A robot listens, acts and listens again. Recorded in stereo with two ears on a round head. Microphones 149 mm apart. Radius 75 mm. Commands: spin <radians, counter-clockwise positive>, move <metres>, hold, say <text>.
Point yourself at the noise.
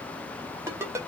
spin -0.26
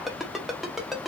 say Found it: a ringtone, straight ahead.